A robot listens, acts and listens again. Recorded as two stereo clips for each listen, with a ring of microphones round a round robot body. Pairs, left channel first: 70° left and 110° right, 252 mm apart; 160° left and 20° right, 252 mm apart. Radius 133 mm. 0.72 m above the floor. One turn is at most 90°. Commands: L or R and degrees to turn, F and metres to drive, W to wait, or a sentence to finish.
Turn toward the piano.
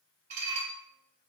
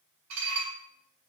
W
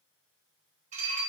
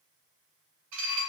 W
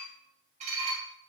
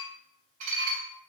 I can't make out a piano to turn to.